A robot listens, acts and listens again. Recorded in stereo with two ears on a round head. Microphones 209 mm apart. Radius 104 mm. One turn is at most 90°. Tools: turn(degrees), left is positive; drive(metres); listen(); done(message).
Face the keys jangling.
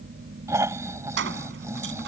turn(degrees=-55)
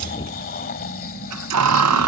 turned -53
turn(degrees=-80)
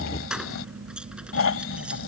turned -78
done("Found it: keys jangling, straight ahead.")